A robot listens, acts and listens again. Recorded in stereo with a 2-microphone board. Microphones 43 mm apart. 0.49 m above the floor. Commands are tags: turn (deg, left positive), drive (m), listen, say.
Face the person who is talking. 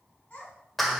<turn deg="35"/>
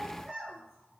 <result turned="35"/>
<say>Found it: a child speaking, straight ahead.</say>